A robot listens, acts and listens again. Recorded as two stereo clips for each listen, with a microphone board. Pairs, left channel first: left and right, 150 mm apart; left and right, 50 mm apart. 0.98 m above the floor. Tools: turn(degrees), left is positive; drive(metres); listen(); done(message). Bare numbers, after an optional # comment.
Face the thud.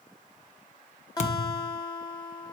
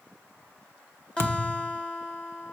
# The thud: about 50° left or 130° left.
turn(50)
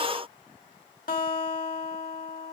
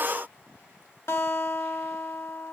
listen()
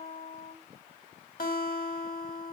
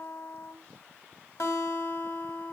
done("I heard a thud, but can't make it out now. It was about straight ahead or 80° left.")